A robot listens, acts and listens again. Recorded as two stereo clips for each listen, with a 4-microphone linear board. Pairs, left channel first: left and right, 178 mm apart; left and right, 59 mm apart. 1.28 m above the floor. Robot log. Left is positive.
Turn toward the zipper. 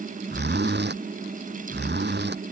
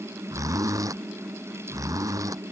note: The zipper: about 75° right or 105° right.
cmd yaw -75
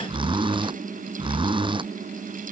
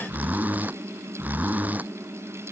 note: So it is at 25° right.
cmd yaw -25
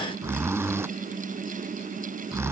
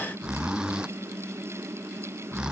note: The zipper is now 15° right.
cmd yaw -15
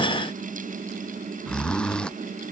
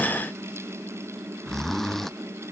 end: Found it: a zipper, straight ahead.